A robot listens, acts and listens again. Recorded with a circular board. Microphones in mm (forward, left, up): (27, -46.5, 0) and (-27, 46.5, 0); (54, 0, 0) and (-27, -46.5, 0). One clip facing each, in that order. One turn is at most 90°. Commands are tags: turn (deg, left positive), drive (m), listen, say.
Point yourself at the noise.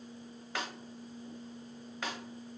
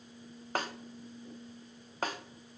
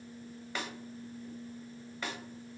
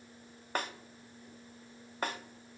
<turn deg="90"/>
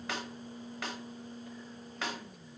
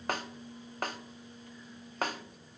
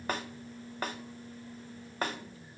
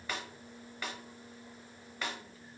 <turn deg="75"/>
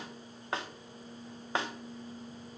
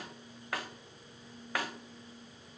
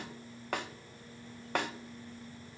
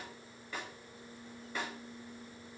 <say>Found it: a snare drum, straight ahead, under 1 m away.</say>